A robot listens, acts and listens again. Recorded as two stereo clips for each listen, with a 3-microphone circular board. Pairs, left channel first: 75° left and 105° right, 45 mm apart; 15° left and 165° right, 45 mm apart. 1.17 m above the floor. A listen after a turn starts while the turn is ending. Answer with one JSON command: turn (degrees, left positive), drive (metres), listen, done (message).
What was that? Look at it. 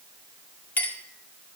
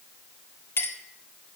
{"turn": 30}
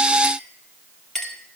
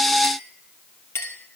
{"done": "Facing the clink."}